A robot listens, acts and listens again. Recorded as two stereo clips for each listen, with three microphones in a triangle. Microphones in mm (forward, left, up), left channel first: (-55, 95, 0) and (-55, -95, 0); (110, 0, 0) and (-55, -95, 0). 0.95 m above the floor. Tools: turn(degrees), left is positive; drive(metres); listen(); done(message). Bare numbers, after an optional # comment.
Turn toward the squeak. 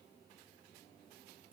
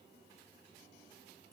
listen()
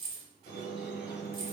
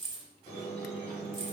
# The squeak: 80° left.
turn(80)
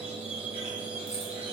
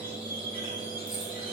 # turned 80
# The squeak is now 10° right.
turn(-10)
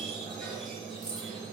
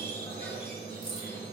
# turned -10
done("Found it: a squeak, straight ahead, 1 to 2 m away.")